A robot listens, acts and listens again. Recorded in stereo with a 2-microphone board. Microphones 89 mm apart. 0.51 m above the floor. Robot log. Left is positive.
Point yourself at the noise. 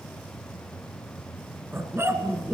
note: The dog barking: about 30° right or 150° right.
cmd yaw -30
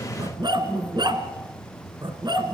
note: So it is at 120° right.
cmd yaw -120
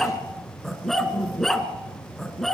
end: Facing the dog barking.